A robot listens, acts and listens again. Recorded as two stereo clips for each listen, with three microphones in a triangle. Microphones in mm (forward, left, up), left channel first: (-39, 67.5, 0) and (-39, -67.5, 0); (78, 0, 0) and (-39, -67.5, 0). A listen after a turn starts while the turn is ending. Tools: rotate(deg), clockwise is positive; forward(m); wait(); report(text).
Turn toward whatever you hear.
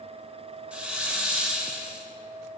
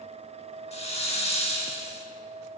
rotate(10)
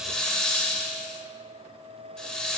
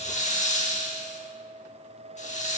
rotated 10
report("Facing the hiss, under 1 m away.")